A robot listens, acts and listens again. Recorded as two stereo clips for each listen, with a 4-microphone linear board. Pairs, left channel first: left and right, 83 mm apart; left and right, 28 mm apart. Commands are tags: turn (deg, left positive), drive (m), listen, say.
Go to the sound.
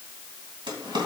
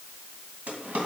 <turn deg="-70"/>
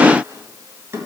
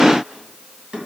<turn deg="-35"/>
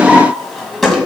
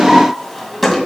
<drive m="1.0"/>
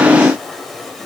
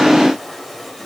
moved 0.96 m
<listen/>
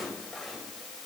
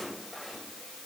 <listen/>
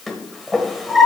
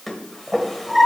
<drive m="1.0"/>
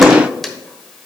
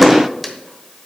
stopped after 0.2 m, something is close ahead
<listen/>
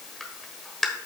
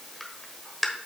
<say>I am next to the drawer.</say>